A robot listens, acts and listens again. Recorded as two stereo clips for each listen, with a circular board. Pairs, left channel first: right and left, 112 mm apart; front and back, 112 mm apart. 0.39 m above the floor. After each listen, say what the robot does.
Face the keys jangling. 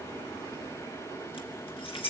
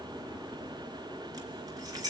Turn 125° right.
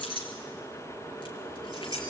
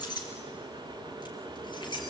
Turn 45° right.
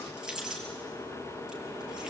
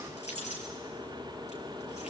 Turn 10° left.
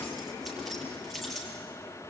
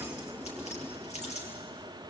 Facing the keys jangling.